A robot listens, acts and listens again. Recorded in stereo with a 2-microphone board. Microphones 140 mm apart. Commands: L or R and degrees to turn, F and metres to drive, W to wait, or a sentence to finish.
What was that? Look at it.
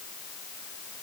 W
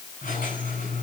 L90
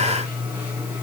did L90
R10
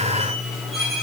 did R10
Found it: a squeak, straight ahead.